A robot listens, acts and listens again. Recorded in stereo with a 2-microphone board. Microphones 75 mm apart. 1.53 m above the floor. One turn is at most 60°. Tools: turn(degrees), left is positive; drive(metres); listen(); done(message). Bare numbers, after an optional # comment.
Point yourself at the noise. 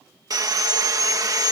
# The sawing: about 55° right or 125° right.
turn(-55)
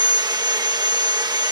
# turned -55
# So it is at 70° right.
turn(-60)
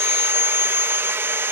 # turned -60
# The sawing is now 35° right.
turn(-35)
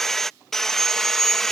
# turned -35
done("Facing the sawing.")